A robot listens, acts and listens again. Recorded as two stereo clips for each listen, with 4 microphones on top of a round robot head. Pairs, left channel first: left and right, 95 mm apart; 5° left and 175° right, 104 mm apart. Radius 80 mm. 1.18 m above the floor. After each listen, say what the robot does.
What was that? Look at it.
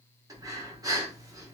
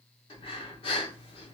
Turn 40° right.
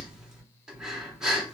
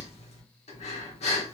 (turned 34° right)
Facing the breathing.